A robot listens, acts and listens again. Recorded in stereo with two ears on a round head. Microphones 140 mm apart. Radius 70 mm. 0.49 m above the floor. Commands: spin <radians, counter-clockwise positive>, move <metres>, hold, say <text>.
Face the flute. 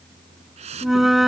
spin 0.52
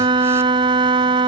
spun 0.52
spin -0.52
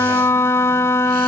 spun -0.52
spin 0.26
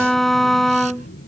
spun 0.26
say Found it: a flute, straight ahead.